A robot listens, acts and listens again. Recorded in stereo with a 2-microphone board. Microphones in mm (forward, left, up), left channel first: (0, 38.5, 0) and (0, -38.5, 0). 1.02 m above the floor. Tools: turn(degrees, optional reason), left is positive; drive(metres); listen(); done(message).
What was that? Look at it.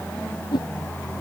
turn(degrees=90)
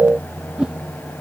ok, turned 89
turn(degrees=-10, reason="So it is at 10° right.")
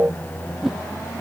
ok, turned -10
done("Found it: a whoosh, straight ahead.")